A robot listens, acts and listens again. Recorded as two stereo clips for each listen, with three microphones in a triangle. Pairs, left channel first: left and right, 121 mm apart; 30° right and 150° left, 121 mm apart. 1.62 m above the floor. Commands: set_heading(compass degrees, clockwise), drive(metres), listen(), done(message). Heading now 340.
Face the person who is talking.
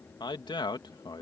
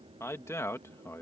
set_heading(300)
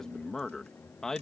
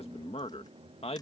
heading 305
done("Found it: a man speaking, straight ahead.")